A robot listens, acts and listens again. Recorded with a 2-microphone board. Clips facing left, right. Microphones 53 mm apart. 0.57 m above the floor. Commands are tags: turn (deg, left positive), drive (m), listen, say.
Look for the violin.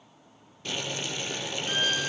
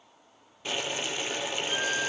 <turn deg="70"/>
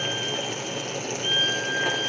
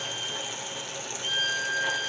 <turn deg="35"/>
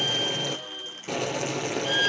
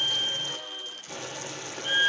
<turn deg="-15"/>
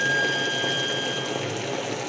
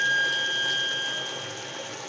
<say>Facing the violin.</say>